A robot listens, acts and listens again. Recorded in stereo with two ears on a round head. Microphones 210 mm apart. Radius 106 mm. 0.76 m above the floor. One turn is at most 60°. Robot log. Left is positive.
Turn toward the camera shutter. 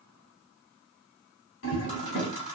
note: The camera shutter: about 30° left or 150° left.
cmd yaw +30
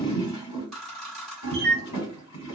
end: Found it: a camera shutter, straight ahead.